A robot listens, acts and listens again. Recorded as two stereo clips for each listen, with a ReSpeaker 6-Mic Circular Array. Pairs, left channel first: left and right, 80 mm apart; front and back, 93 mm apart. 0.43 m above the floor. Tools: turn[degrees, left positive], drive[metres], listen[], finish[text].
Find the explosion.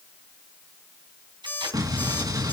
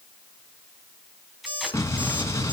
Thought: The explosion: 55° right.
Action: turn[-55]
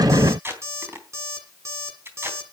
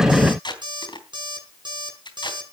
Action: finish[I heard an explosion from this way, but can't make it out now.]